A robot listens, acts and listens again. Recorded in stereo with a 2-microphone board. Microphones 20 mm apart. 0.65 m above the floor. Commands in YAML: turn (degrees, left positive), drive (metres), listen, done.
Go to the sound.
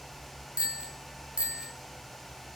turn: -60
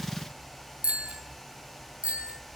turn: -65
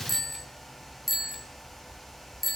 drive: 1.0
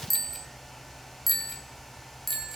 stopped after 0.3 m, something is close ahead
done: "Something is in my way. I am facing the bicycle bell but have not reached it."